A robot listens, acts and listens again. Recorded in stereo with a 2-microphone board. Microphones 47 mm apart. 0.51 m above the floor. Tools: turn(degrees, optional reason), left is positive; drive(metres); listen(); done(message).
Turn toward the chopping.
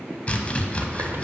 turn(degrees=30, reason="The chopping: about 30° left or 150° left.")
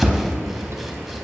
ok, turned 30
done("Found it: chopping, straight ahead.")